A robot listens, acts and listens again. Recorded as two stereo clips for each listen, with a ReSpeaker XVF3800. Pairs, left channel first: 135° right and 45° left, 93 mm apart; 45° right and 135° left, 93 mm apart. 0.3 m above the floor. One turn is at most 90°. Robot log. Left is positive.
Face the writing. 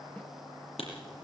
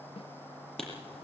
note: The writing: 130° right.
cmd yaw -90
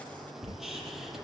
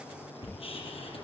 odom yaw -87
note: The writing is now 40° right.
cmd yaw -40
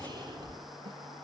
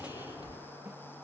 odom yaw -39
end: Found it: writing, straight ahead.